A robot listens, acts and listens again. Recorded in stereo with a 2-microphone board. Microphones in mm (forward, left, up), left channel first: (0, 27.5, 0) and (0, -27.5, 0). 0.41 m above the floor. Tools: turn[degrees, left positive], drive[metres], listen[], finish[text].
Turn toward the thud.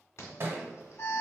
Thought: The thud: about 40° right or 140° right.
Action: turn[-40]
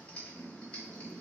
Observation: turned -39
Action: listen[]
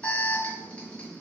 Action: finish[I heard a thud, but can't make it out now. It was about 5° right or 100° right.]